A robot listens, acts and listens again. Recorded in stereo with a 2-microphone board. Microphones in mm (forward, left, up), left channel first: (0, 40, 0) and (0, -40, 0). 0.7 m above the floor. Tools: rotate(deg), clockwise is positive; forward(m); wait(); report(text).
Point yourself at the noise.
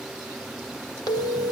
rotate(-55)
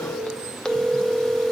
rotate(-10)
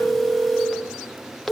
report("Facing the phone ringing, 1 to 2 m away.")